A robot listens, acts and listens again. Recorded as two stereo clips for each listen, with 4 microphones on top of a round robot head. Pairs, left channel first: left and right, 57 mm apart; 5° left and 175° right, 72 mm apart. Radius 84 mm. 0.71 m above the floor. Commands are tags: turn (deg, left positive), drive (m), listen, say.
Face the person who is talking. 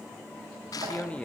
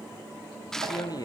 <turn deg="20"/>
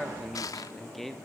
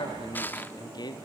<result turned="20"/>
<say>Found it: a man speaking, straight ahead.</say>